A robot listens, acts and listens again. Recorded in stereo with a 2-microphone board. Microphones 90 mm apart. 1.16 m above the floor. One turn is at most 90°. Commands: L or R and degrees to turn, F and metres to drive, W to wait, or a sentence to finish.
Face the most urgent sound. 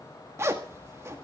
W
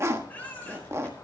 L15
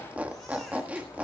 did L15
W
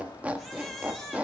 Found it: a baby crying, straight ahead, over 4 m away.